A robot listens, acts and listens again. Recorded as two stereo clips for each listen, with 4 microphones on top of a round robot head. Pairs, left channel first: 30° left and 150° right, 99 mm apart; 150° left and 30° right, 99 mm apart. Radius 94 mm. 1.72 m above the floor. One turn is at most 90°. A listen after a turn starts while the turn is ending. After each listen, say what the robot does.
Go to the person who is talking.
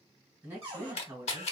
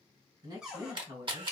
Turn 80° right.
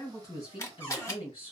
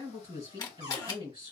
Drive 1.0 m forward.
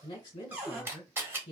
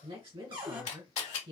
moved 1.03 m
Drive 1.0 m forward.
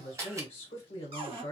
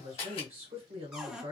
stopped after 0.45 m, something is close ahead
I am next to the woman speaking.